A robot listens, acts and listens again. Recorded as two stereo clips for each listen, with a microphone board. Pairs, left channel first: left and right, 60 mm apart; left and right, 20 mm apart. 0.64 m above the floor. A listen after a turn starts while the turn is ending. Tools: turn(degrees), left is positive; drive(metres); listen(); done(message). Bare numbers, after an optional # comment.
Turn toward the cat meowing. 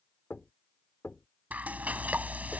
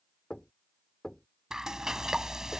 listen()
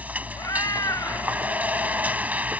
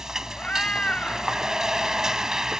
turn(90)
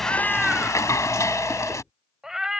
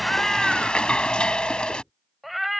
done("Found it: a cat meowing, straight ahead.")